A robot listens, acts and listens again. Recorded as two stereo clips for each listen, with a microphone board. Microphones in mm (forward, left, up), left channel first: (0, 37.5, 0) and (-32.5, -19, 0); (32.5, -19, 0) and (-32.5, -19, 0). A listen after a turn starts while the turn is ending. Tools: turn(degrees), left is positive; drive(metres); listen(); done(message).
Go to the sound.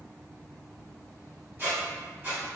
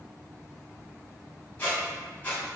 turn(degrees=-60)
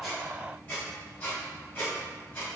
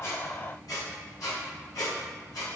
drive(metres=1.0)
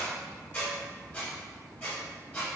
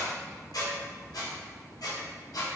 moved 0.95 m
drive(metres=1.0)
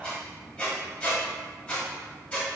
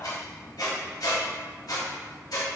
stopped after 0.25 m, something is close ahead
turn(degrees=-10)
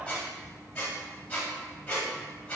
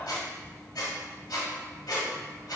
done("I am next to the squeak.")